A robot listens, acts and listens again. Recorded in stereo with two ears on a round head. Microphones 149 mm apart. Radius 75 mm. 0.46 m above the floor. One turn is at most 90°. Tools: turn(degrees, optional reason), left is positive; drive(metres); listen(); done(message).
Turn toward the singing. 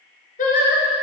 turn(degrees=55, reason="The singing: about 55° left or 125° left.")
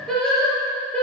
done("Found it: singing, straight ahead.")